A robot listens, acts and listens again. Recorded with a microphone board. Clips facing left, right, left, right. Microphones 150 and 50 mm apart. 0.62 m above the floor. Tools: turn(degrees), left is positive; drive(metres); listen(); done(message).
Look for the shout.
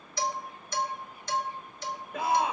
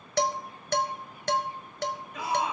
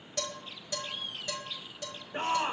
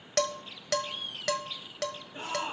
turn(degrees=55)
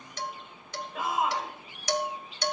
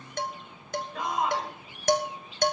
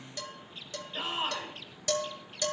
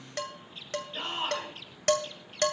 done("Found it: a shout, straight ahead.")